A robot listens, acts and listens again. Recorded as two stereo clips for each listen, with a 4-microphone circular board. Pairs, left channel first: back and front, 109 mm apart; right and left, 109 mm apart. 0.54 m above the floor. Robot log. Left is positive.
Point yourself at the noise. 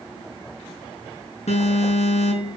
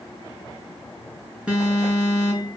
note: The alarm: 170° left.
cmd yaw +170
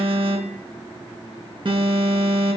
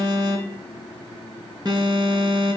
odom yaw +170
note: The alarm is now 40° left.
cmd yaw +40
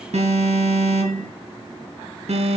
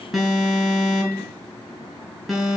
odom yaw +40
end: Found it: an alarm, straight ahead, over 4 m away.